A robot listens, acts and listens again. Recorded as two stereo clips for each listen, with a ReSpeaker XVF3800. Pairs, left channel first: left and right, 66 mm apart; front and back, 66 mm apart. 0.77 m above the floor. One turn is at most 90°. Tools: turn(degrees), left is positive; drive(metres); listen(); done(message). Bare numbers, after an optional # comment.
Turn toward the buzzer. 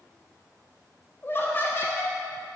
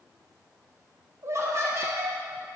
listen()
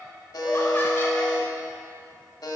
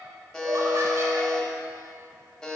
# The buzzer: 80° left.
turn(80)
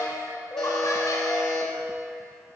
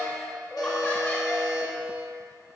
done("Facing the buzzer, 1 to 2 m away.")